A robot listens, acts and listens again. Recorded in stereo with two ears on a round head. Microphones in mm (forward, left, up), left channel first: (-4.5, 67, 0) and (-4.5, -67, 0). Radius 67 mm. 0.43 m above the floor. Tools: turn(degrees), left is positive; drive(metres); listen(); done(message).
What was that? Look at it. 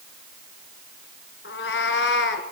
turn(degrees=90)
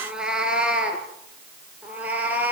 turn(degrees=-10)
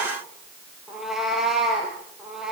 done("Facing the cat meowing.")